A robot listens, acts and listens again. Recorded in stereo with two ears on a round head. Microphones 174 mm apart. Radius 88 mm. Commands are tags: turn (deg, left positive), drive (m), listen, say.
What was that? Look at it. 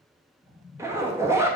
<turn deg="-30"/>
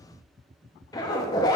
<turn deg="20"/>
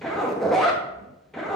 <say>Found it: a zipper, straight ahead, under 1 m away.</say>